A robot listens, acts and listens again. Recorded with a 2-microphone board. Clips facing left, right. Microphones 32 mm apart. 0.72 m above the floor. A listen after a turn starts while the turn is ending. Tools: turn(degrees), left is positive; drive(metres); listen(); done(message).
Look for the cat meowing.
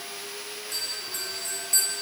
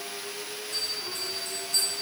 listen()
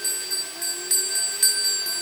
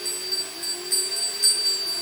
listen()
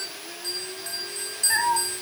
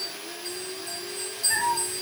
turn(degrees=30)
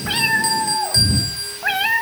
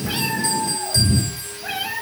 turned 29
turn(degrees=105)
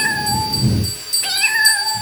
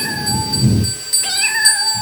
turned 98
done("Found it: a cat meowing, straight ahead.")